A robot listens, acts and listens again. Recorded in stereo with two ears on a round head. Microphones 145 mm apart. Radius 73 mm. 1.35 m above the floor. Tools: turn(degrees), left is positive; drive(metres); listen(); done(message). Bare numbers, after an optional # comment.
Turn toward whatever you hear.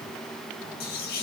# The whispering: about 60° left or 120° left.
turn(60)
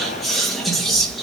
done("Found it: whispering, straight ahead.")